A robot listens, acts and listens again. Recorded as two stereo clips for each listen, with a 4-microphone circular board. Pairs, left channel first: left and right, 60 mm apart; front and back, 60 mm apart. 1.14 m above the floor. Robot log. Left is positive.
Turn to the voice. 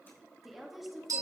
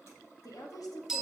end: Facing the woman speaking, 1 to 2 m away.